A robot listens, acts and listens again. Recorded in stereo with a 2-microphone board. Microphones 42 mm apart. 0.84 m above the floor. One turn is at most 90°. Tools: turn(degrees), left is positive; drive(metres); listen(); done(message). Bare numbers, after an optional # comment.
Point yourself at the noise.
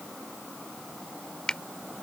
# The finger snap: about 20° left or 160° left.
turn(20)
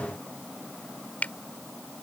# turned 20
# So it is at 140° left.
turn(90)
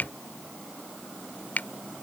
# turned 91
# The finger snap is now 55° left.
turn(55)
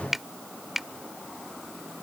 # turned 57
done("Found it: a finger snap, straight ahead.")